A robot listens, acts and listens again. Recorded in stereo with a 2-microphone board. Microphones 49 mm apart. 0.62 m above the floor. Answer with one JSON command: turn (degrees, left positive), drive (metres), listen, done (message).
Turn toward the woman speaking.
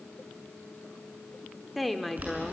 {"turn": 30}
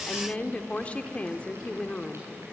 {"turn": 150}
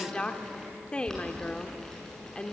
{"turn": 25}
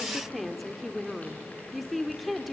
{"done": "Found it: a woman speaking, straight ahead, 1 to 2 m away."}